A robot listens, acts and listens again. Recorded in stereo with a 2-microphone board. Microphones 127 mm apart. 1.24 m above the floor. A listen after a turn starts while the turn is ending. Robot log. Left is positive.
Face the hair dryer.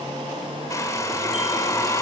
note: The hair dryer: about 25° left or 155° left.
cmd yaw +25
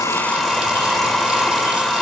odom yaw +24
end: Facing the hair dryer, 2 to 4 m away.